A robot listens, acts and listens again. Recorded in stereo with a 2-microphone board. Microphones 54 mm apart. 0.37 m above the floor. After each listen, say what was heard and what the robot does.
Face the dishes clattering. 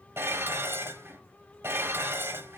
The dishes clattering: about 50° right or 130° right. Turn 50° right.
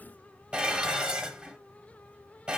So it is at 25° right. Turn 25° right.
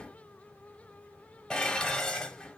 The dishes clattering is now 10° left. Turn 10° left.
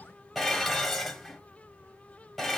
Facing the dishes clattering.